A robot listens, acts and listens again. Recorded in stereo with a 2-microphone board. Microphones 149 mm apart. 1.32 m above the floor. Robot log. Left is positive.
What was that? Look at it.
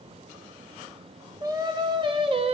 note: The singing: about 40° right or 140° right.
cmd yaw -40
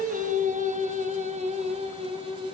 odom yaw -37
note: The singing: about 35° right or 145° right.
cmd yaw -35
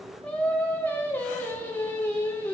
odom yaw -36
note: So it is at 15° left.
cmd yaw +15
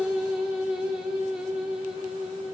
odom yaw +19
end: Found it: singing, straight ahead, 2 to 4 m away.